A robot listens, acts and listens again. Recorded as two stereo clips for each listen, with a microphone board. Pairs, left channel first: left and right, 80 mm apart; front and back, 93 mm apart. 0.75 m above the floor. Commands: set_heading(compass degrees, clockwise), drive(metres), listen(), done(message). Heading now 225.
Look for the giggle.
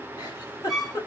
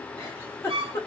set_heading(165)
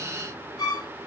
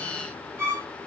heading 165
listen()
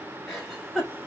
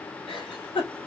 done("Facing the giggle, 2 to 4 m away.")